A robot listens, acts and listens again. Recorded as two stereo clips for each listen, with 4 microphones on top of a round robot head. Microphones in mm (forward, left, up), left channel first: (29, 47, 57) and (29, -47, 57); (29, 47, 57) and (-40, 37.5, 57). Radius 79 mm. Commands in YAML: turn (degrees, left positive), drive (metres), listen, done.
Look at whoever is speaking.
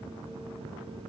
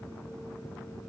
listen: true
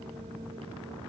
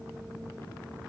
listen: true
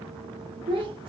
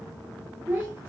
turn: -110
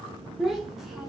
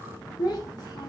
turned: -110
done: "Found it: a child speaking, straight ahead."